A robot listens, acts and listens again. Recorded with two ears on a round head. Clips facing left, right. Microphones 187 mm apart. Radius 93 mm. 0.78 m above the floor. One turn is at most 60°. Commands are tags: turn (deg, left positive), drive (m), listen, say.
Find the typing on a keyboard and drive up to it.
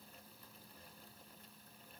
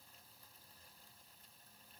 <listen/>
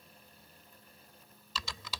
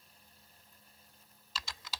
<turn deg="60"/>
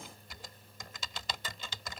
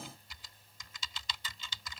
<turn deg="45"/>
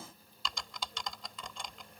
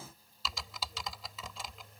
<drive m="1.0"/>
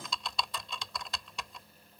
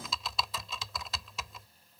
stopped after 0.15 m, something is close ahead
<say>Something is in my way. I am facing the typing on a keyboard but have not reached it.</say>